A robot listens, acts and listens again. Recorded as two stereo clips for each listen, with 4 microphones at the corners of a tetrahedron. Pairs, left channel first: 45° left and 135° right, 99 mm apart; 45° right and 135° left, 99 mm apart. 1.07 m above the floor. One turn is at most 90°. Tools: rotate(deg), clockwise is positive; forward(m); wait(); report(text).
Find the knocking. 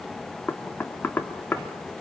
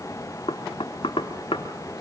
rotate(25)
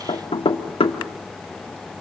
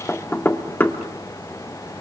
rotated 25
rotate(-25)
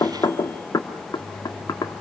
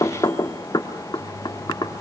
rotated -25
report("Found it: knocking, straight ahead.")